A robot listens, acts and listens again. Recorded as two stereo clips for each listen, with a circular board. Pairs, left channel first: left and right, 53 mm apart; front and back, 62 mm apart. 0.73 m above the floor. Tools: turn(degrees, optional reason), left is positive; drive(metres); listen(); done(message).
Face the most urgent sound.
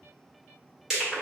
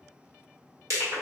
listen()
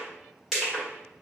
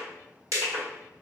listen()
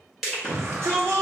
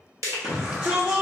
turn(degrees=-110, reason="The shout: 110° right.")
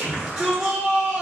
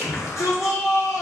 turn(degrees=-20, reason="The shout is now 20° right.")
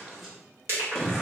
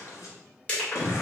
done("Facing the shout.")